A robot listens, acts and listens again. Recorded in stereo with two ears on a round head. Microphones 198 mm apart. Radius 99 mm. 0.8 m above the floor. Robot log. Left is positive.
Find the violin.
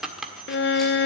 note: The violin: about 50° left or 130° left.
cmd yaw +50
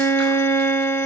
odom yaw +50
note: So it is at 15° left.
cmd yaw +15
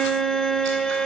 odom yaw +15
end: Facing the violin, under 1 m away.